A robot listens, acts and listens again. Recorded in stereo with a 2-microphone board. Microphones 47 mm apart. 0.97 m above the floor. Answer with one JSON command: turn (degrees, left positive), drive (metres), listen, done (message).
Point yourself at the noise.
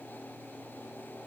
{"listen": true}
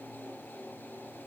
{"listen": true}
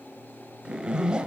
{"turn": -20}
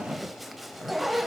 {"done": "Found it: a zipper, straight ahead, 1 to 2 m away."}